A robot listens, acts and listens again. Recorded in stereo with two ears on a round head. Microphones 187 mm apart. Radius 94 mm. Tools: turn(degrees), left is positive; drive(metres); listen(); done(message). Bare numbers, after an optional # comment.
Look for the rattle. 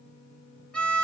listen()
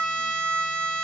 listen()
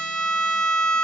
done("I can't make out a rattle, only a violin.")